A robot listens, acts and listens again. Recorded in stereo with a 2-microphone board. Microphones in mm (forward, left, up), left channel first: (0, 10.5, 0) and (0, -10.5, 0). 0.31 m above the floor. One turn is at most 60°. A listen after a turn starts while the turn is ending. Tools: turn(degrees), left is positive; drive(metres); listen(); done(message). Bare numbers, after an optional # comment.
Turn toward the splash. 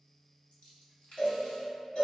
# The splash: about 70° left or 110° left.
turn(60)
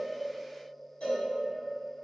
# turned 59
listen()
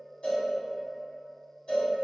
done("I heard a splash, but can't make it out now. It was about 10° left or 50° left.")